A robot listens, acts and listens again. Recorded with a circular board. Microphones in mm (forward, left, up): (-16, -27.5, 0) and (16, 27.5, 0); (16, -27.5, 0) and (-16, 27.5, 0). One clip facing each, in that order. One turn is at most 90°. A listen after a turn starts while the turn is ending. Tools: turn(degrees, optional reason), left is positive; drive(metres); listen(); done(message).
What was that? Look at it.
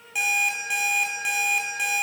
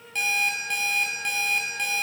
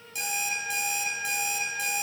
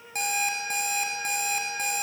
turn(degrees=90, reason="The alarm clock: 160° left.")
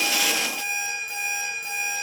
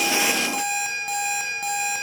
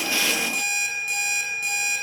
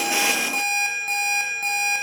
turn(degrees=75, reason="The alarm clock is now 75° left.")
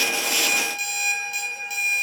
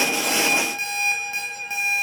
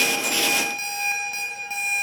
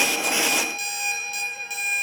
done("Facing the alarm clock, over 4 m away.")